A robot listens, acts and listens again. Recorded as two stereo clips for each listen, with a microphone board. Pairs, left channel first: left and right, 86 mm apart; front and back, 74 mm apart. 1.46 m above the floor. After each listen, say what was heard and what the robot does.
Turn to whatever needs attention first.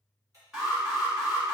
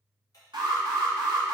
The alarm: 170° right. Turn 170° right.
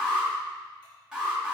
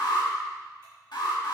Found it: an alarm, straight ahead, 2 to 4 m away.